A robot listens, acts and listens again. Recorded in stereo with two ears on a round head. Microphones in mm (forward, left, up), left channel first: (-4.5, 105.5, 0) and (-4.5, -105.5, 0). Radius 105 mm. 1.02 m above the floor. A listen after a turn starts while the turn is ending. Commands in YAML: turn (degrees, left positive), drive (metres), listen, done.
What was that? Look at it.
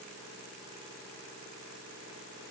listen: true
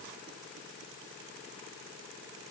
listen: true
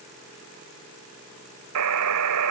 turn: -90
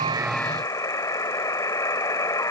turn: 15
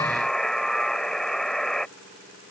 done: "Facing the buzzer."